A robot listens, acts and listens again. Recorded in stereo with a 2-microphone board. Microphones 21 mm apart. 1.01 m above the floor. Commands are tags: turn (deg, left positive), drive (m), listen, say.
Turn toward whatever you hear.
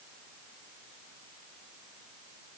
<listen/>
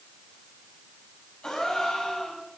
<turn deg="35"/>
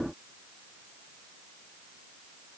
<listen/>
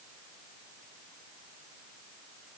<say>I heard a gasp, but can't make it out now. It was about straight ahead or 110° left.</say>